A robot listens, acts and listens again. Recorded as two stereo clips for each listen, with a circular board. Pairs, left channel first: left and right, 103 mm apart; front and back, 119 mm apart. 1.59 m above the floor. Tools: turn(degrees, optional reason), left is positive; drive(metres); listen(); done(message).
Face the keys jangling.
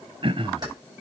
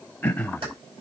turn(degrees=-140, reason="The keys jangling: 140° right.")
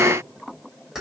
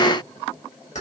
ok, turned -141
done("Found it: keys jangling, straight ahead, over 4 m away.")